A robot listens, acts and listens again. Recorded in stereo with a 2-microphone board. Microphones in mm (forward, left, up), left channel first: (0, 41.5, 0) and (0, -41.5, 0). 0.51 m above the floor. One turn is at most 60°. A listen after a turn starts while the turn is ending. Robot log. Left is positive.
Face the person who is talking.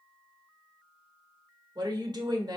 note: The woman speaking: about 55° right or 125° right.
cmd yaw -55
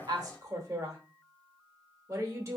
note: So it is at 50° right.
cmd yaw -50
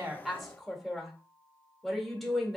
end: Facing the woman speaking, 1 to 2 m away.